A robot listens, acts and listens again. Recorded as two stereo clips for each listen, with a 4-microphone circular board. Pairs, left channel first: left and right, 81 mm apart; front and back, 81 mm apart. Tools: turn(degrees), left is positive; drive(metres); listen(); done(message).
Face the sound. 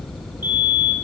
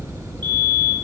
turn(degrees=-155)
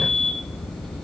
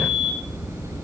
done("Found it: a fire alarm, straight ahead.")